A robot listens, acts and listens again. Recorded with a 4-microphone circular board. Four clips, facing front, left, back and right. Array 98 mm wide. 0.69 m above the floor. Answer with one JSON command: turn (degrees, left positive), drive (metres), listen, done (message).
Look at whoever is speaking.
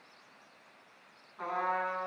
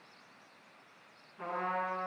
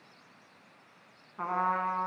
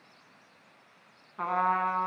{"listen": true}
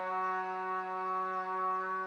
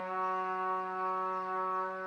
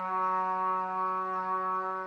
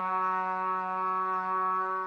{"listen": true}
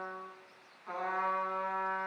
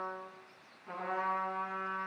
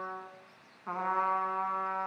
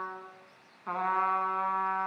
{"done": "I can't make out anyone speaking to turn to."}